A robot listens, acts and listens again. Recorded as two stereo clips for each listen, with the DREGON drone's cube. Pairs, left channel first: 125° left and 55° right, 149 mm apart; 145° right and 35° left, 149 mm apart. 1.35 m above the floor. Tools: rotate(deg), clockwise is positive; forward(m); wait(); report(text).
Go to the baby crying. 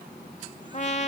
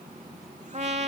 wait()
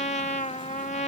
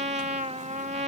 wait()
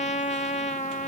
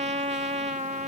report("I can't make out a baby crying, only a trumpet.")